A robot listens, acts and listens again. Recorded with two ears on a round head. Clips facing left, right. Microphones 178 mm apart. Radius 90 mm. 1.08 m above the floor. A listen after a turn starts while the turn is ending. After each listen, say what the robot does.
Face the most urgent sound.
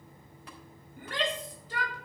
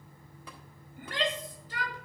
Turn 90° left.
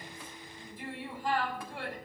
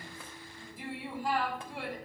Found it: a shout, straight ahead, 2 to 4 m away.